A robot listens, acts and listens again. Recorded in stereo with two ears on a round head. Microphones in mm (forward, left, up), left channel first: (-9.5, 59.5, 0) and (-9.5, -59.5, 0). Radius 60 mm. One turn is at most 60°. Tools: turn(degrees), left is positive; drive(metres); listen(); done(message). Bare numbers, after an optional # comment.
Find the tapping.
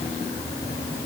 listen()
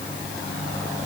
listen()
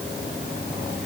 done("I can't make out tapping to turn to.")